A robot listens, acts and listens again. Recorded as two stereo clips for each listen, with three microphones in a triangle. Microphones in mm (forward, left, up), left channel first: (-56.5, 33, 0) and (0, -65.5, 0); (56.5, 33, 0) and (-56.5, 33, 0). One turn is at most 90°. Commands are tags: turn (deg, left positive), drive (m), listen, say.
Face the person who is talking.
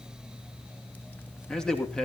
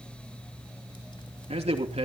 <turn deg="-90"/>
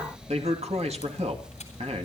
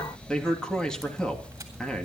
<turn deg="-85"/>
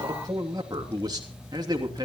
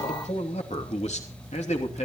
<turn deg="-10"/>
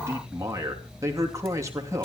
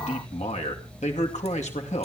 <say>Found it: a man speaking, straight ahead.</say>